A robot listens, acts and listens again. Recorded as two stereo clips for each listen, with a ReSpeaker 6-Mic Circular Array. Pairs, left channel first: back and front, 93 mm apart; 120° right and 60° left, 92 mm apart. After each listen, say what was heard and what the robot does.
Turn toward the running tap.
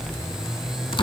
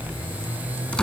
Keep listening.
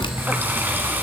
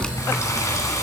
The running tap: 65° right. Turn 65° right.
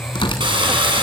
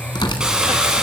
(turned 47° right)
The running tap is now 20° right. Turn 20° right.
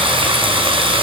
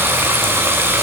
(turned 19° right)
Found it: a running tap, straight ahead, 2 to 4 m away.